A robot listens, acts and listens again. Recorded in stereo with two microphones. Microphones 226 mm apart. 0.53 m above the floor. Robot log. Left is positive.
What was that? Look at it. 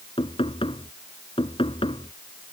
note: The knocking: about 25° left or 155° left.
cmd yaw +25
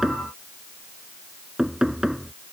end: Facing the knocking.